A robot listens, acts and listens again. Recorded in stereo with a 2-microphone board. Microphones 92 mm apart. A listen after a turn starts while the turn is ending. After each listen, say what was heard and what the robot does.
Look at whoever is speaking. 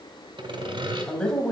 Turn 30° left.
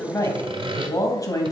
So it is at 135° left. Turn 135° left.
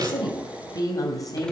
The woman speaking is now 45° left. Turn 45° left.
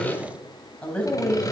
The woman speaking is now 15° left. Turn 15° left.
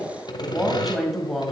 Found it: a woman speaking, straight ahead, 2 to 4 m away.